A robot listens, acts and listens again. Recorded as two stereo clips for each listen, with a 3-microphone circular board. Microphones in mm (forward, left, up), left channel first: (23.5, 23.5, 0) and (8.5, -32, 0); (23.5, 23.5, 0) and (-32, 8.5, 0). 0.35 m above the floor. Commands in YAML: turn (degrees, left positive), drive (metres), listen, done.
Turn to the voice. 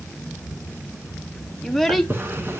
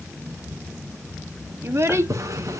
turn: 165
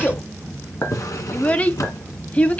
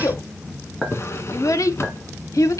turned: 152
turn: 10
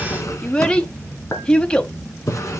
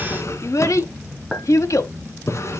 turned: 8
done: "Found it: a child speaking, straight ahead, 1 to 2 m away."